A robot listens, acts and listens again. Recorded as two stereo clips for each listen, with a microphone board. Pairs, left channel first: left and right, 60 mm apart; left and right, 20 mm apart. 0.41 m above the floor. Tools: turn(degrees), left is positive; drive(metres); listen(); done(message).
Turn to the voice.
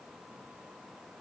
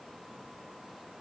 listen()
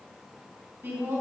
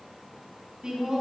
turn(degrees=-35)
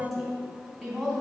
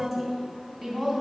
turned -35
done("Facing the woman speaking, 2 to 4 m away.")